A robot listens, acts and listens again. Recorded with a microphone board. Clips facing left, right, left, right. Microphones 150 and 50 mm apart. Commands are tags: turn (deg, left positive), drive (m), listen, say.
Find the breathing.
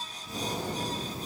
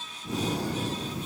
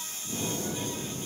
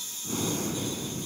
<turn deg="-75"/>
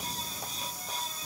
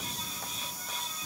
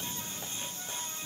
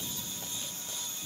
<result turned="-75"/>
<listen/>
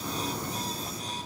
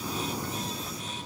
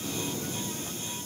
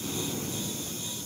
<turn deg="-10"/>
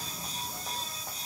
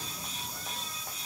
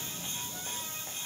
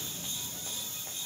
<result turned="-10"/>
<listen/>
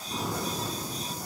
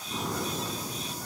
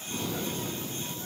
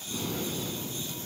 <say>Facing the breathing.</say>